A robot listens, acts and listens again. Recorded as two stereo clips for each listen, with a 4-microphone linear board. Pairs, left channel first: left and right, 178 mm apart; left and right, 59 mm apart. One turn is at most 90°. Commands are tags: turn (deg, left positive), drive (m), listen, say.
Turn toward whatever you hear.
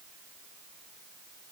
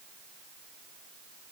<listen/>
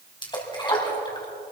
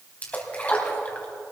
<turn deg="25"/>
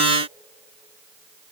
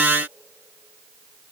<listen/>
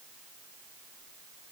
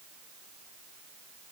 <say>I heard a splash, but can't make it out now. It was about straight ahead or 130° left.</say>